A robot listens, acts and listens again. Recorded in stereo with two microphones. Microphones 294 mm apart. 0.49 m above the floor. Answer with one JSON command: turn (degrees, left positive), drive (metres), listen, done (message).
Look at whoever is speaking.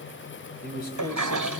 {"turn": 30}
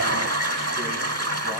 {"listen": true}
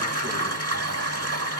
{"listen": true}
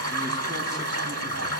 {"done": "I heard a man speaking, but can't make it out now. It was about straight ahead or 120° left."}